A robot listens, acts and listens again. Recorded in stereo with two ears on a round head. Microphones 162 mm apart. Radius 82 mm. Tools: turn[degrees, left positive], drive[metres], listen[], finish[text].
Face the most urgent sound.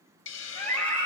Action: turn[30]
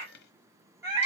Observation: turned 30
Thought: So it is at 20° right.
Action: turn[-20]
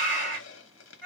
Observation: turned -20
Action: finish[Facing the scream.]